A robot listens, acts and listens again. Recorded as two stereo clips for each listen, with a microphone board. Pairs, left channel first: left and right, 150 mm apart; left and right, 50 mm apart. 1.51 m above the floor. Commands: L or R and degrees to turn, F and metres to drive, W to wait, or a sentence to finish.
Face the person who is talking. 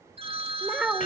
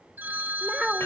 R30
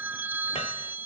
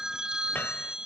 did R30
W
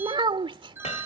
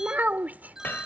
R145
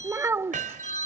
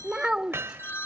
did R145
R15
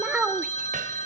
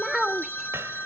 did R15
Found it: a child speaking, straight ahead.